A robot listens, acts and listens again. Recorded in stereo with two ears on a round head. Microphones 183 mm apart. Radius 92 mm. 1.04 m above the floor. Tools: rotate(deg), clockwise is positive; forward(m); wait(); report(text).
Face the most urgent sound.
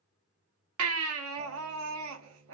rotate(75)
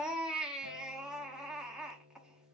report("Facing the baby crying, 1 to 2 m away.")